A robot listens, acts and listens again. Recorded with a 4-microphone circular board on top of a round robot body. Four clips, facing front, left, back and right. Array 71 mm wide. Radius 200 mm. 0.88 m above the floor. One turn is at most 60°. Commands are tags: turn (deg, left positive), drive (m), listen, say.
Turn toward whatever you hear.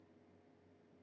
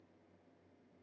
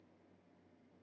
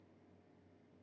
<listen/>
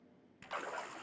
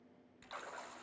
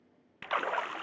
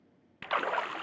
<turn deg="-60"/>
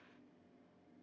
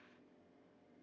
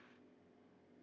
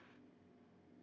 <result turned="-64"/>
<turn deg="-60"/>
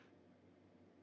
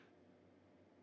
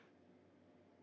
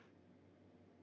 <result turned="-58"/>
<say>Facing where the splash came from. I can't hear it now.</say>